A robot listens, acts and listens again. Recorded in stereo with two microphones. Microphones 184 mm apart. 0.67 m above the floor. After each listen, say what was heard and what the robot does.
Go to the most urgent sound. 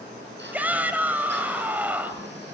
Turn 30° right.
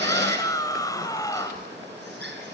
So it is at 20° left. Turn 20° left.
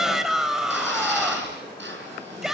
Drive 1.0 m forward.
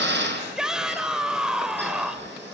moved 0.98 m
Drive 1.0 m forward.
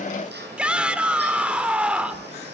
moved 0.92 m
Drive 1.0 m forward.
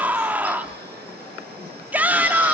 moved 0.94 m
The shout is now 10° right. Turn 10° right.
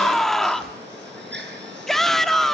Drive 1.0 m forward.
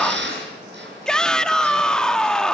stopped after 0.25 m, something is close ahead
Arrived at the shout, straight ahead.